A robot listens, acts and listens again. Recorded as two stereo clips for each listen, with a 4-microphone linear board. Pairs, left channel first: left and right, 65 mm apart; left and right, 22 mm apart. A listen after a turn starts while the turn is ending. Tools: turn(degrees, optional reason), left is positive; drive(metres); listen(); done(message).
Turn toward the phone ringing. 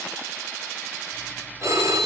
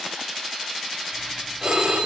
turn(degrees=-50, reason="The phone ringing: about 50° right or 130° right.")
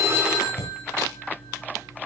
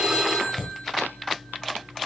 listen()
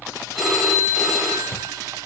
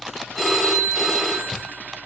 done("Found it: a phone ringing, straight ahead, 2 to 4 m away.")